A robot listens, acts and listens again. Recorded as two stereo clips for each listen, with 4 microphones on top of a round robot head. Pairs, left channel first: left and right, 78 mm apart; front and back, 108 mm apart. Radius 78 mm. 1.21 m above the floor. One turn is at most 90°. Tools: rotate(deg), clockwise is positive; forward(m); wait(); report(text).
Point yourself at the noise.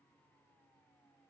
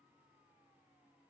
wait()
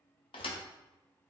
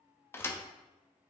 rotate(-65)
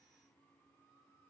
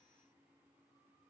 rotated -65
report("I heard a thud from this way, but can't make it out now.")